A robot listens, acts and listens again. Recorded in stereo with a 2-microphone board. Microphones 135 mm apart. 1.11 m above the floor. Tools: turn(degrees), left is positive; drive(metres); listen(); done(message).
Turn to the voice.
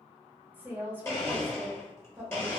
turn(degrees=-30)
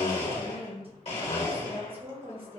turn(degrees=-135)
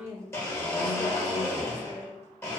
turn(degrees=-20)
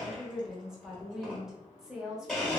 done("Found it: a woman speaking, straight ahead.")